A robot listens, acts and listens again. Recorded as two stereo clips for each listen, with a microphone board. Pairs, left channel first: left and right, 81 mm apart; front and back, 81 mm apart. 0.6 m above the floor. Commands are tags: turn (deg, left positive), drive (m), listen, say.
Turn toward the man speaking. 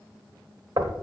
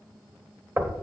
<listen/>
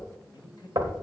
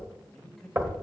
<turn deg="85"/>
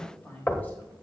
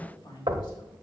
<turn deg="20"/>
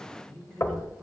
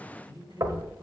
<turn deg="10"/>
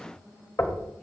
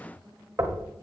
<listen/>
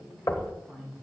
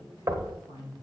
<turn deg="10"/>
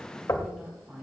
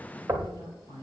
<say>Found it: a man speaking, straight ahead.</say>